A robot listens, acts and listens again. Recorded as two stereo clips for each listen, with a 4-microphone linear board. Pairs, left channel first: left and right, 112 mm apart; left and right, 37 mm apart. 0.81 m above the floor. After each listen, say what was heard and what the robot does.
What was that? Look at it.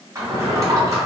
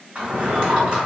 The drawer: about 30° right or 150° right. Turn 30° right.
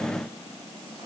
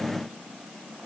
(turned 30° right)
Keep listening.
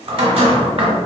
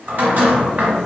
So it is at 115° right. Turn 115° right.
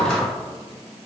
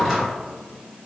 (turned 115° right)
Found it: a drawer, straight ahead.